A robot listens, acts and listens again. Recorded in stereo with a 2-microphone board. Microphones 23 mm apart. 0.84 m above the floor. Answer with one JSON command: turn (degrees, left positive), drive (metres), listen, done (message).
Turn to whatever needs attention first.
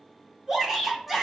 {"turn": -20}
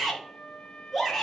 {"done": "Facing the shout, 2 to 4 m away."}